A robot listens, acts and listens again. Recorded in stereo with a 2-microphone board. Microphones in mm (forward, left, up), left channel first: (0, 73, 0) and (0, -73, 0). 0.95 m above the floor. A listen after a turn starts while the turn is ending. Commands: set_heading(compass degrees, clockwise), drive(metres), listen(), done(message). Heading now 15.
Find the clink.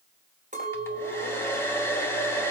set_heading(75)
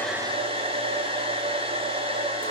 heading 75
listen()
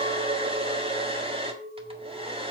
set_heading(140)
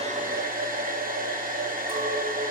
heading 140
listen()
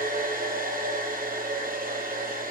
listen()
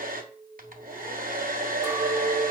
set_heading(155)
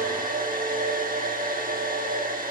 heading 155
listen()
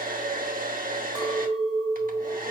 done("Facing the clink, 2 to 4 m away.")